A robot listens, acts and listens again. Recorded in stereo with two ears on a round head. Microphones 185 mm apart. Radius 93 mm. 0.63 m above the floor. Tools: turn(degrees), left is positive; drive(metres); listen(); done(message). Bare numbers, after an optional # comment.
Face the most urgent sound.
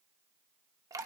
listen()
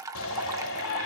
# The shout: about 70° left or 110° left.
turn(70)
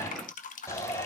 # So it is at 15° left.
turn(15)
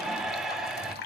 done("Facing the shout, 2 to 4 m away.")